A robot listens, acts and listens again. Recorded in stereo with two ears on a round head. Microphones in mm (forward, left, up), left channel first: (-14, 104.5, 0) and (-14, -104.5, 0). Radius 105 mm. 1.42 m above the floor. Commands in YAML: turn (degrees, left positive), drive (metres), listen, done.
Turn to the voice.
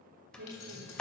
turn: -45
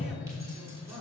listen: true
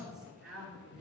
done: "Facing the woman speaking, 2 to 4 m away."